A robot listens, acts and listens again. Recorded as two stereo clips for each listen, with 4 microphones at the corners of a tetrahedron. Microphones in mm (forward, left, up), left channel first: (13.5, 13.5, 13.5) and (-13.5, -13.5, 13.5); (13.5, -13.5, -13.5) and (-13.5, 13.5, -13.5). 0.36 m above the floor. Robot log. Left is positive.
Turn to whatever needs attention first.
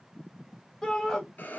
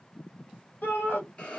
note: The shout: 35° right.
cmd yaw -35
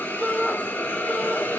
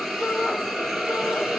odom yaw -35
end: Found it: a shout, straight ahead, 1 to 2 m away.